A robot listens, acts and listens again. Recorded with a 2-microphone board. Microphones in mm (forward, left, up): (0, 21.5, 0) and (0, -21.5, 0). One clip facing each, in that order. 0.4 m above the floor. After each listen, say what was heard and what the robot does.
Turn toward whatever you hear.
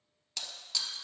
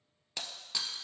The breaking glass: about 20° right or 160° right. Turn 20° right.
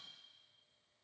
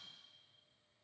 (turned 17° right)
Keep listening.
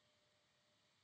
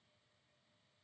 I heard breaking glass, but can't make it out now. It was about 5° right or 140° right.